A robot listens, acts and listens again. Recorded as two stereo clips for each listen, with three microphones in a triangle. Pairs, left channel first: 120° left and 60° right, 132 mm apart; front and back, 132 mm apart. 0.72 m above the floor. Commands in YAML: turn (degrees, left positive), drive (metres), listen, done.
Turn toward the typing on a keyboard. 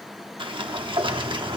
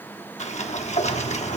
listen: true
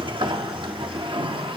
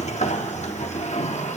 listen: true
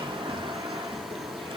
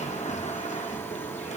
done: "I can't make out typing on a keyboard, only a sliding door."